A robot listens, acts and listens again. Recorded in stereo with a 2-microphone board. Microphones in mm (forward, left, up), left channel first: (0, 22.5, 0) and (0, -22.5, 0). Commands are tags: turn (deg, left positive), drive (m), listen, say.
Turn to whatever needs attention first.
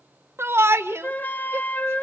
<turn deg="-65"/>
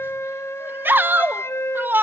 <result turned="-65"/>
<turn deg="-50"/>
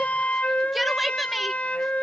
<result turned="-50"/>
<say>Found it: a shout, straight ahead, 1 to 2 m away.</say>